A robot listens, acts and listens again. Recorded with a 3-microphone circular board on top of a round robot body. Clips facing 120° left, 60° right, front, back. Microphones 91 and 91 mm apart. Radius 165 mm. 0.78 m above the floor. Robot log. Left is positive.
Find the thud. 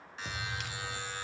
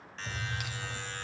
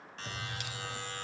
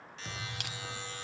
note: The thud: 95° left.
cmd yaw +95
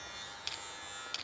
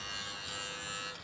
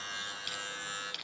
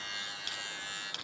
end: Facing where the thud came from. I can't hear it now.